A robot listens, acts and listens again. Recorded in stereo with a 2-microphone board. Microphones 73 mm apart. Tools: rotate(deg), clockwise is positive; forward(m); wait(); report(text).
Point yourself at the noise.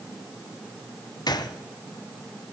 rotate(-70)
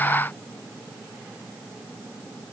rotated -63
wait()
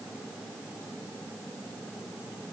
report("I heard a gunshot, but can't make it out now. It was about 10° left or 45° left.")